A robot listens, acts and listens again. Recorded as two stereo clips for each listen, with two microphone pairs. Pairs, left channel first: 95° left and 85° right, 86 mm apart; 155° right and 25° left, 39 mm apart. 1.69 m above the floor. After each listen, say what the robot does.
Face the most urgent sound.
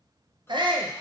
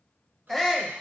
Turn 70° right.
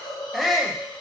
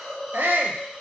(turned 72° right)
Found it: a shout, straight ahead, under 1 m away.